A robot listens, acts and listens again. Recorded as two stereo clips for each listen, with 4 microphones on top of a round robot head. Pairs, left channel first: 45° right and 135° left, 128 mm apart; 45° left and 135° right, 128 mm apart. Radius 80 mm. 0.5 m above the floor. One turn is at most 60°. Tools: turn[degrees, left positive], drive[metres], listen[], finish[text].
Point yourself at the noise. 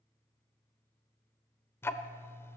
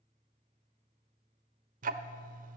Thought: The ticking: 120° right.
Action: turn[-60]
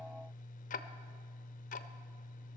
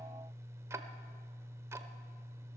Thought: The ticking is now 65° right.
Action: turn[-60]
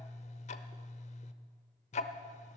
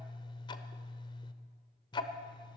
Thought: The ticking is now 10° right.
Action: turn[-10]
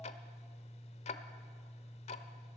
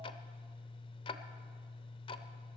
Action: finish[Facing the ticking, under 1 m away.]